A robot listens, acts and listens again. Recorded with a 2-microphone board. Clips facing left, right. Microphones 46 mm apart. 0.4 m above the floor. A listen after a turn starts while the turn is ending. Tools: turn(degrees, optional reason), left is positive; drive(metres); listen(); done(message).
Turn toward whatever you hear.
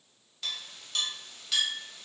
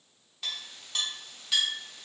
turn(degrees=-30)
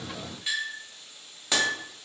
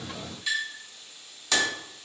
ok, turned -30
turn(degrees=25, reason="So it is at 25° left.")
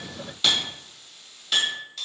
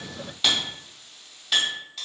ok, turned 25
done("Facing the clink.")